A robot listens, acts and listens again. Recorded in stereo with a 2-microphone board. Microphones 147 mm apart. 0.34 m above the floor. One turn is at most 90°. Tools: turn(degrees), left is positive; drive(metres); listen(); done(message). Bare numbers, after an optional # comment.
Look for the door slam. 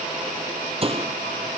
# The door slam: about 40° right or 140° right.
turn(-40)
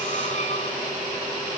listen()
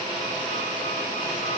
done("I heard a door slam, but can't make it out now. It was about straight ahead or 100° right.")